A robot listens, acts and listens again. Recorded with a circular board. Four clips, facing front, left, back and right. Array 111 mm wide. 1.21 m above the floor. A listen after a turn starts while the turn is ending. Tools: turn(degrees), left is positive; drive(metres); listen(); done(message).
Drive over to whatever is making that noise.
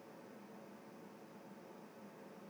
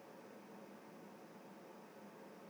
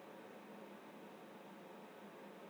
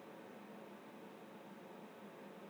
listen()
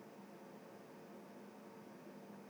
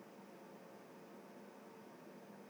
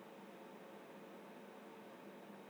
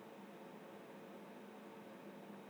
listen()
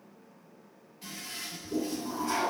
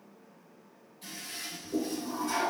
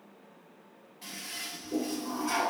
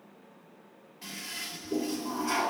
turn(degrees=-105)
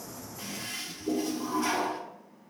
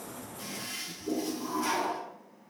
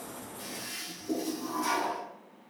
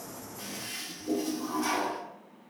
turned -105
drive(metres=1.0)
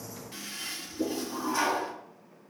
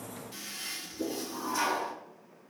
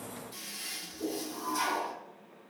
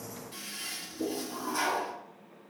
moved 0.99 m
drive(metres=1.0)
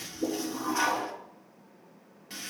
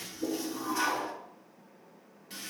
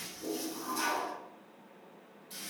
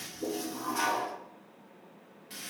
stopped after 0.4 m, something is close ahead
done("I am next to the toilet flushing.")